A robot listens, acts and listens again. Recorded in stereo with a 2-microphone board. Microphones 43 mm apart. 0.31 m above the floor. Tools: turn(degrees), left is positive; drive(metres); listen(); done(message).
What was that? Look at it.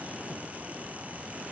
listen()
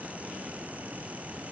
listen()
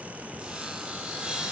turn(degrees=-20)
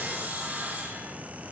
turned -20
turn(degrees=-135)
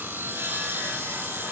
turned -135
turn(degrees=-55)
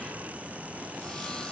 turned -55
listen()
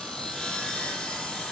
turn(degrees=20)
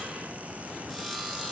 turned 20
done("Facing the sawing.")